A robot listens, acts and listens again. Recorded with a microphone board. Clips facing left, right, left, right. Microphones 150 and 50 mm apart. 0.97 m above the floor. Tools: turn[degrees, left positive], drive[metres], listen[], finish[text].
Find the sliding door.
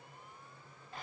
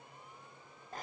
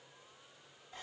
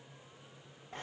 Action: listen[]
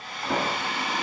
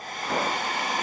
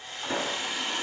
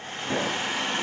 Action: turn[30]
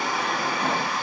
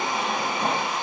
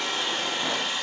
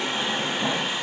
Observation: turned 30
Thought: So it is at 25° right.
Action: turn[-25]
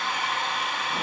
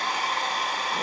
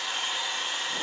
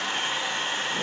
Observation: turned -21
Action: listen[]
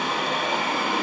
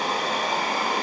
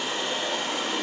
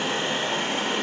Action: finish[Facing the sliding door, 2 to 4 m away.]